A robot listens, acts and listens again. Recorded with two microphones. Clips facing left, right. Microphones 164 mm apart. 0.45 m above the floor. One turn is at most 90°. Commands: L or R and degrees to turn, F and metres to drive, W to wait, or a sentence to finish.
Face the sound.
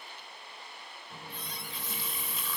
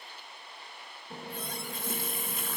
R50
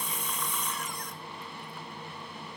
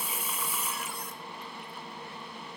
Found it: a running tap, straight ahead, 1 to 2 m away.